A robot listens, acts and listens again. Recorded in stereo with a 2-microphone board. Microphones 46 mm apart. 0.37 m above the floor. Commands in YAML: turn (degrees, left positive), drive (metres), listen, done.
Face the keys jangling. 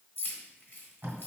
turn: 50
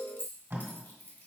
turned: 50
turn: 70
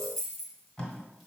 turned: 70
done: "Facing the keys jangling, 1 to 2 m away."